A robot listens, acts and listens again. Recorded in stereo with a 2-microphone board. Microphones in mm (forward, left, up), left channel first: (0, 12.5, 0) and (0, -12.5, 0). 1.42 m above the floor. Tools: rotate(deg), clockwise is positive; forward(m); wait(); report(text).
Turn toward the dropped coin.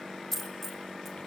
rotate(-30)
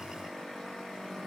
wait()
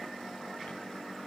report("I heard a dropped coin, but can't make it out now. It was about 20° right or 140° left.")